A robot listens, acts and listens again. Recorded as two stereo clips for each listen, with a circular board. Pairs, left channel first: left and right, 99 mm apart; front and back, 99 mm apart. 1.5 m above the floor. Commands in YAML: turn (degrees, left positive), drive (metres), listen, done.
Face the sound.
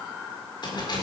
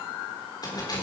turn: 45
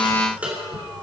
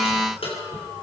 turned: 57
turn: -15
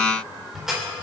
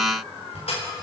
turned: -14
done: "Found it: keys jangling, straight ahead."